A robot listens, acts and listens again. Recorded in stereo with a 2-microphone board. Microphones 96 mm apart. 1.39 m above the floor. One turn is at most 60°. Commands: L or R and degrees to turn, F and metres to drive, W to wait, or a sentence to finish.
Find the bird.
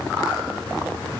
W
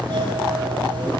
W
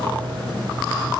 I can't make out a bird, only a doorbell.